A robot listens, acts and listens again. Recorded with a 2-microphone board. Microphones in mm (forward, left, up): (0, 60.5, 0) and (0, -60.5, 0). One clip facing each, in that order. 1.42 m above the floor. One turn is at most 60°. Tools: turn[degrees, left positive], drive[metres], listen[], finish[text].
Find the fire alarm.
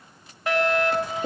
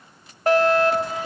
Thought: The fire alarm: about 45° right or 135° right.
Action: turn[-45]
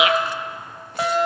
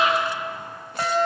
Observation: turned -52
Action: finish[Found it: a fire alarm, straight ahead.]